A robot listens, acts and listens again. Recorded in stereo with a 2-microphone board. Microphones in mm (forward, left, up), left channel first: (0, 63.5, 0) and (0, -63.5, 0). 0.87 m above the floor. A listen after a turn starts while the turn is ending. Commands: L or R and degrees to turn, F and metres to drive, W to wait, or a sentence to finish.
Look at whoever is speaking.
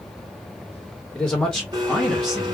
L30
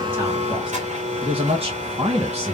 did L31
R55
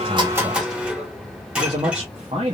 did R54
R50
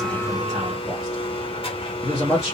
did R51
Facing the man speaking.